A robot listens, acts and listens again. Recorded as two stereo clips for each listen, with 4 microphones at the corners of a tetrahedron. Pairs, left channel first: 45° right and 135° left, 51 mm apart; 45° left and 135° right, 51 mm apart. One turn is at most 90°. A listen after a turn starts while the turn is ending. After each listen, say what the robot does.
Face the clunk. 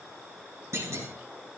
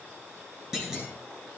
Turn 90° left.
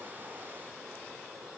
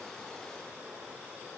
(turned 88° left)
Turn 55° left.
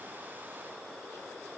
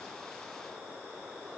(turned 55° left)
I heard a clunk from this way, but can't make it out now.